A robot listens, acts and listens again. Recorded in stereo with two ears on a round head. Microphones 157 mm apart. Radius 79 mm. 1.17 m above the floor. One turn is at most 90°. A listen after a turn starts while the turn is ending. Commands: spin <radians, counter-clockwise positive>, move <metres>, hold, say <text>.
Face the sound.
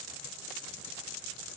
hold
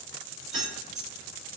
spin 0.52
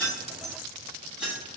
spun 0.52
spin -0.52
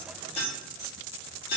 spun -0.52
spin 0.87
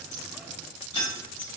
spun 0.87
spin 0.44
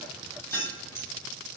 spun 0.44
spin 0.17
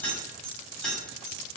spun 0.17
say Found it: keys jangling, straight ahead.